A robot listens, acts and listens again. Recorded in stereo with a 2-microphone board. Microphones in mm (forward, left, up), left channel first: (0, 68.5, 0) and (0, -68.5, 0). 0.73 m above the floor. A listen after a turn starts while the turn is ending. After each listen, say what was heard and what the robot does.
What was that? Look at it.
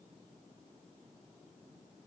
Keep listening.
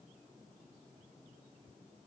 Keep listening.
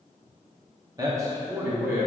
The man speaking: about 15° right or 165° right. Turn 15° right.
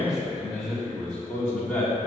Turn 30° left.
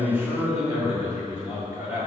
So it is at 20° right. Turn 20° right.
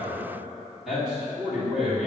Found it: a man speaking, straight ahead.